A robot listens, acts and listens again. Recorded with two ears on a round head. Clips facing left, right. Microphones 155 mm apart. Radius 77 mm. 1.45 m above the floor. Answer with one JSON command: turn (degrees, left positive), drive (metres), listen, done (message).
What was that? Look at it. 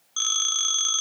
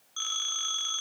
{"turn": 50}
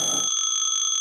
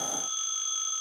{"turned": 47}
{"turn": 80}
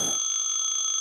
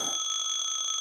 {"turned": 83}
{"done": "Found it: a phone ringing, straight ahead."}